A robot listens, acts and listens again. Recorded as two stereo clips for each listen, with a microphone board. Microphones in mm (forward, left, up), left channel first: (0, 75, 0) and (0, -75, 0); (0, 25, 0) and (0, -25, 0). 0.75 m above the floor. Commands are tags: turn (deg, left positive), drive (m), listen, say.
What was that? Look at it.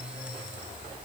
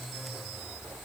<listen/>
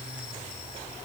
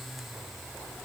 <listen/>
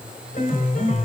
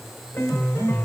<turn deg="60"/>
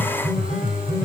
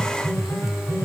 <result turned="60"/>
<turn deg="60"/>
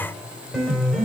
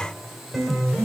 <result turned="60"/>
<say>Facing the piano.</say>